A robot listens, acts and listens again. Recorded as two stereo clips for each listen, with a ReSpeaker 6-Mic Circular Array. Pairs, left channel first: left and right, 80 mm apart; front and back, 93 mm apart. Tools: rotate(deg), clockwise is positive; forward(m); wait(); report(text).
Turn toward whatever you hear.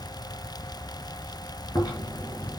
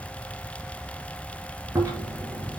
rotate(-125)
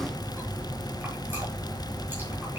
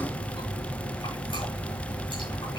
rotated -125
rotate(30)
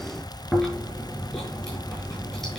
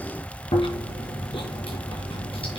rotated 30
report("Facing the chewing.")